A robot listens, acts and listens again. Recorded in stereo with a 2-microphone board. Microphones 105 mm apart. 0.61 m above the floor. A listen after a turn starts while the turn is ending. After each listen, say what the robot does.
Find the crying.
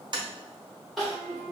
Turn 30° left.
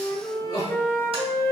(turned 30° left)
Turn 150° left.
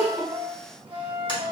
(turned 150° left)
Keep listening.
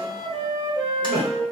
Turn 10° right.
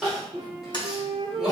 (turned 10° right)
Facing the crying.